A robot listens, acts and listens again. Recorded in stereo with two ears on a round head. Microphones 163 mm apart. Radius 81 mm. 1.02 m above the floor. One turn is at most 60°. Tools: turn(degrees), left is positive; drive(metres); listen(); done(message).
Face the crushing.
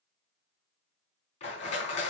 turn(degrees=35)
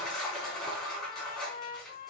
done("Found it: crushing, straight ahead.")